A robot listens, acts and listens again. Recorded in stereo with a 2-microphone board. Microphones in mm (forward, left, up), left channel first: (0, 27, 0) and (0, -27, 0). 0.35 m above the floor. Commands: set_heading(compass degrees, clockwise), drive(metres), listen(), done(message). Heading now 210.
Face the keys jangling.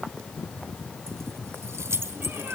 set_heading(270)
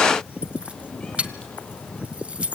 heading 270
set_heading(295)
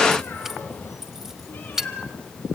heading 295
set_heading(305)
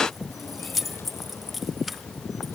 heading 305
done("Facing the keys jangling.")